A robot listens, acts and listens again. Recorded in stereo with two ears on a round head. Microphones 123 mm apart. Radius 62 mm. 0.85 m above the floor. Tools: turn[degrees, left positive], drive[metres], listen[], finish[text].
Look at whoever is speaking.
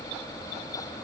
Action: listen[]
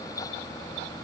Action: listen[]
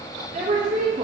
Thought: The woman speaking: about 60° right or 120° right.
Action: turn[-60]
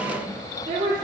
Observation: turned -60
Thought: So it is at 40° right.
Action: turn[-40]
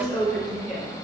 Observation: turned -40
Action: finish[Facing the woman speaking.]